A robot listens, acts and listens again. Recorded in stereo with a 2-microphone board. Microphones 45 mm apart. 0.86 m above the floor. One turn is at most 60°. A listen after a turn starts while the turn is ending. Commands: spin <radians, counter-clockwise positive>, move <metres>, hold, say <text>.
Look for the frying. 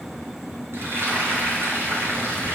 spin -1.05
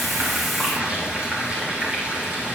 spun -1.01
spin -0.44
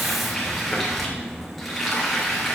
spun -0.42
say Facing the frying.